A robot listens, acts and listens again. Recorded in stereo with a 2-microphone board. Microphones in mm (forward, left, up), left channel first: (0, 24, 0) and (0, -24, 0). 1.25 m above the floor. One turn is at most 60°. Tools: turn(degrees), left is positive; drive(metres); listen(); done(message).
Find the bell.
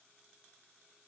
listen()
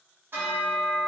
turn(degrees=-50)
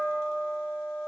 turn(degrees=-60)
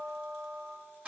turn(degrees=-30)
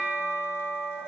done("Facing the bell, 1 to 2 m away.")